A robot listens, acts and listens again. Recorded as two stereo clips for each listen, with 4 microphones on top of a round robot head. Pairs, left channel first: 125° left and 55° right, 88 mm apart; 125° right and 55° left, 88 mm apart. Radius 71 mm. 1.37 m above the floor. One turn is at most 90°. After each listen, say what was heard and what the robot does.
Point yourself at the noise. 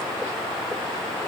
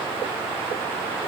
Keep listening.
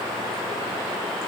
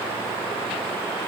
Keep listening.
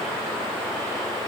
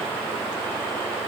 I can't make out anything to turn to.